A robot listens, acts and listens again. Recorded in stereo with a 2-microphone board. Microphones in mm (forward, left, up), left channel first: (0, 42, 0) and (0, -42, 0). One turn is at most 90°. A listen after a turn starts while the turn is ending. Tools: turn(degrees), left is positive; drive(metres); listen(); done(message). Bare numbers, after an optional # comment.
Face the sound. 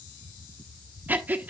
# The breathing: about 20° right or 160° right.
turn(-20)
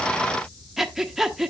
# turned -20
done("Found it: breathing, straight ahead.")